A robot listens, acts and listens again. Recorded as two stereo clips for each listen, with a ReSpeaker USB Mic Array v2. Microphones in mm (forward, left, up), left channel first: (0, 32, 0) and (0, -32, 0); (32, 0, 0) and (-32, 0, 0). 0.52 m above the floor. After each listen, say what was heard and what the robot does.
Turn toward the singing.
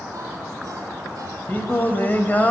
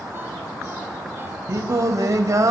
The singing: 155° left. Turn 155° left.
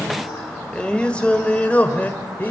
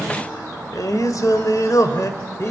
The singing is now 30° left. Turn 30° left.
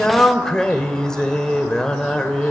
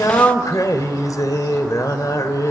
The singing is now 10° left. Turn 10° left.
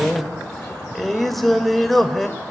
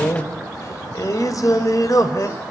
Facing the singing, 2 to 4 m away.